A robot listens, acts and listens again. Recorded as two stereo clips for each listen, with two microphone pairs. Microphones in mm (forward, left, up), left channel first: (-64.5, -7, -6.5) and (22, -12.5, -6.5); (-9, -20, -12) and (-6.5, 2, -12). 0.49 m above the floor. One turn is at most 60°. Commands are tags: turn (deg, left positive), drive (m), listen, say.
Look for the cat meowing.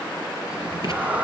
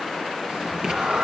<turn deg="60"/>
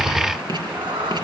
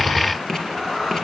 <turn deg="-15"/>
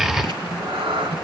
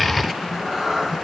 <turn deg="-10"/>
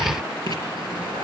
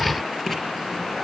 <listen/>
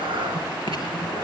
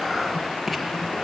<turn deg="-15"/>
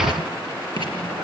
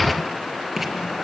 <listen/>
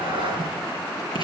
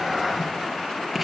<turn deg="-10"/>
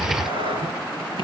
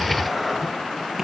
<say>Facing the cat meowing, 2 to 4 m away.</say>